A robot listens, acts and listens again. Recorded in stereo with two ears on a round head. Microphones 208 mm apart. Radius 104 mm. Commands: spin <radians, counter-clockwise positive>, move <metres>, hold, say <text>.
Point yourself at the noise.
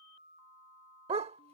spin -0.44
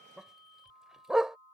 say Facing the dog barking.